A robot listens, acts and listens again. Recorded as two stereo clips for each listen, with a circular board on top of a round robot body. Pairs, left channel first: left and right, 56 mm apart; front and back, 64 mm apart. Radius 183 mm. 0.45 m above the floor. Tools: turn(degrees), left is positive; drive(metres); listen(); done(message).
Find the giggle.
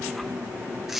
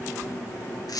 listen()
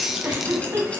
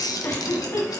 turn(degrees=-60)
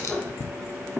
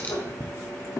listen()
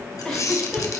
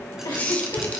turn(degrees=15)
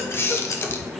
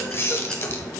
listen()
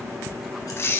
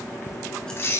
listen()
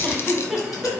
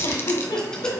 done("Facing the giggle, 1 to 2 m away.")